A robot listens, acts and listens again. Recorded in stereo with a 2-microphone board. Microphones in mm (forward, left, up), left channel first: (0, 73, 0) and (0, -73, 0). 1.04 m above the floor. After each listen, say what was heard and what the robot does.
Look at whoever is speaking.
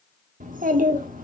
The child speaking: about 65° right or 115° right. Turn 65° right.
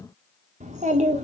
So it is at 50° right. Turn 50° right.
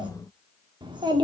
The child speaking is now 30° right. Turn 30° right.
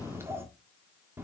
The child speaking is now 15° right. Turn 15° right.
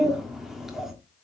Found it: a child speaking, straight ahead.